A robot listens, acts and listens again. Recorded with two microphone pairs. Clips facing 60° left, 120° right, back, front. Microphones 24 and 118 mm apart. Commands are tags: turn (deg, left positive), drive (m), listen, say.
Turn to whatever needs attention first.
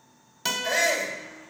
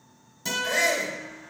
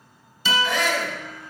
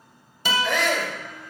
<turn deg="-10"/>
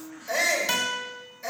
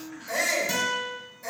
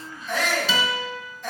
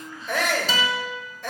<say>Facing the shout, 1 to 2 m away.</say>